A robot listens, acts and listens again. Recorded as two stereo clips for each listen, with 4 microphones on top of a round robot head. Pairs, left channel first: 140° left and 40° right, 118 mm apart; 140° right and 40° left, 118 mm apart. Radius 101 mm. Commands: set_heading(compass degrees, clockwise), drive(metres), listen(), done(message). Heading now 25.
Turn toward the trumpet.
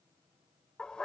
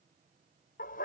listen()
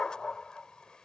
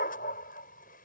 listen()
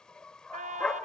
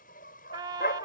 set_heading(40)
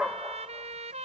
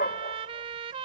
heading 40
done("Facing the trumpet.")